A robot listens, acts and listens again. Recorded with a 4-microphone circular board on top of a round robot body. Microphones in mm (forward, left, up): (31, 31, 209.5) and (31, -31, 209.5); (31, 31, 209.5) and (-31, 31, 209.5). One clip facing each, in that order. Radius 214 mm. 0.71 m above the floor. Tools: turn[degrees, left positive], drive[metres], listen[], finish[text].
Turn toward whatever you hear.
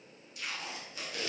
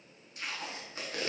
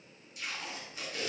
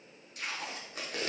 Thought: The tape being pulled: 140° right.
Action: turn[-140]
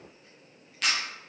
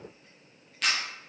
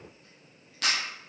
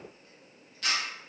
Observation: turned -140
Action: finish[Facing the tape being pulled.]